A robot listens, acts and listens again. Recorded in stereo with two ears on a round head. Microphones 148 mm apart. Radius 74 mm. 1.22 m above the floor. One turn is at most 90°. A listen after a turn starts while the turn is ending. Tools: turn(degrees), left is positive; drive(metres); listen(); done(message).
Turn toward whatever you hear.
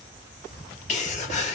turn(degrees=45)
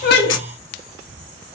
turn(degrees=90)
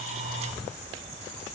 done("Facing where the sneeze came from. I can't hear it now.")